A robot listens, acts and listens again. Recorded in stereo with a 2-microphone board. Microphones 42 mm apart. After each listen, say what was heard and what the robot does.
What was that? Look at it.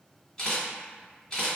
The camera shutter: about 15° left or 165° left. Turn 15° left.
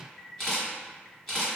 Facing the camera shutter, 1 to 2 m away.